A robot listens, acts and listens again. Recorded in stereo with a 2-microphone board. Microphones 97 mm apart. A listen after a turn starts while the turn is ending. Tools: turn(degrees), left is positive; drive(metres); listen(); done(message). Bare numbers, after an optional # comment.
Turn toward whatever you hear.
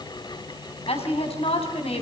turn(90)
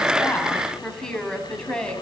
# So it is at 10° left.
turn(10)
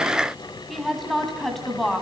done("Facing the woman speaking.")